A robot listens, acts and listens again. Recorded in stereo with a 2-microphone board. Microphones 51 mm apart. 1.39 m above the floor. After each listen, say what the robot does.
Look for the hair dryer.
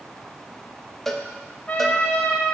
Keep listening.
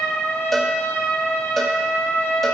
Keep listening.
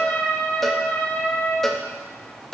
I can't make out a hair dryer to turn to.